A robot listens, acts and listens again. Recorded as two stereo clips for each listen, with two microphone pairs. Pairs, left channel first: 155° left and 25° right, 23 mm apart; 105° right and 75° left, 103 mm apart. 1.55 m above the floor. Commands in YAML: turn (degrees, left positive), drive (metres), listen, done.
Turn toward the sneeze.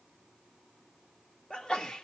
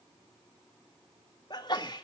turn: -150
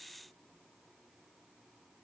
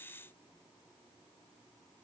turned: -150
done: "Facing where the sneeze came from. I can't hear it now."